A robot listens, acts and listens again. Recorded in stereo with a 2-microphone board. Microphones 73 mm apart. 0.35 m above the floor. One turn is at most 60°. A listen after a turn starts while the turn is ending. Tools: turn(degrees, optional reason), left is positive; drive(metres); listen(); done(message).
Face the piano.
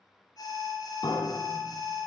turn(degrees=60, reason="The piano: about 65° left or 115° left.")
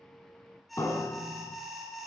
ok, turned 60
turn(degrees=45, reason="So it is at 45° left.")
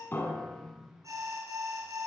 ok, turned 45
done("Found it: a piano, straight ahead.")